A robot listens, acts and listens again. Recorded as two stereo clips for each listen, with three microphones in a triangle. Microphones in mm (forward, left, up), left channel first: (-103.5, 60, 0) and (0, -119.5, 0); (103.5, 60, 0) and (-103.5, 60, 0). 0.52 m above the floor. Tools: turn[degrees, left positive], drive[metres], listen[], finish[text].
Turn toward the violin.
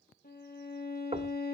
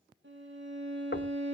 Thought: The violin: 160° left.
Action: turn[160]
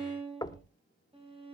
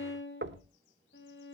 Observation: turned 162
Action: finish[Found it: a violin, straight ahead.]